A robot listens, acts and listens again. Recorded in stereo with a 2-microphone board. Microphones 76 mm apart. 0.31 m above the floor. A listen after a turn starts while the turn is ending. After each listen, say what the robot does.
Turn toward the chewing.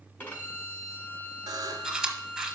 Turn 30° right.
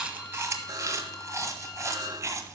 Turn 145° right.
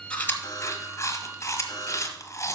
Turn 35° left.
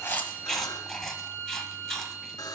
Facing the chewing.